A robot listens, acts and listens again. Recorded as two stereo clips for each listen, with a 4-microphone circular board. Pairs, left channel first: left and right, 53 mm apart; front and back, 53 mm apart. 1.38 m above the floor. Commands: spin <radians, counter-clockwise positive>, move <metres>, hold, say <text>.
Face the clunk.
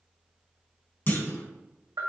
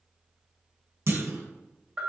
spin 2.53
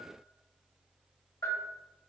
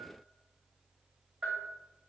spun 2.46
say Facing where the clunk came from. I can't hear it now.